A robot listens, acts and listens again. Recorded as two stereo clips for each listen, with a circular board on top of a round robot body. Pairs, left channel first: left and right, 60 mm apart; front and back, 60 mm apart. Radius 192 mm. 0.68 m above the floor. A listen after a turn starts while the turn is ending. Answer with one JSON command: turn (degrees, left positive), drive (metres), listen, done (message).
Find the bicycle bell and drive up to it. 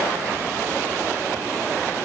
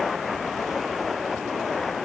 {"listen": true}
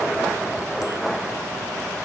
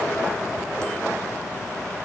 {"listen": true}
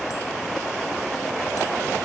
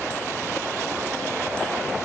{"done": "I can't make out a bicycle bell to turn to."}